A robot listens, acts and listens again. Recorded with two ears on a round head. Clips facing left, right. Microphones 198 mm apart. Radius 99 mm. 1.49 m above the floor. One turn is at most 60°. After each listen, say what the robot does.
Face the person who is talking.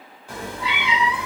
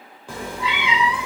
Keep listening.
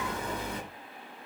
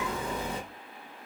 Keep listening.
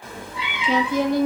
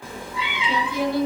Turn 40° left.
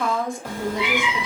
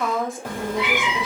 Facing the woman speaking, 1 to 2 m away.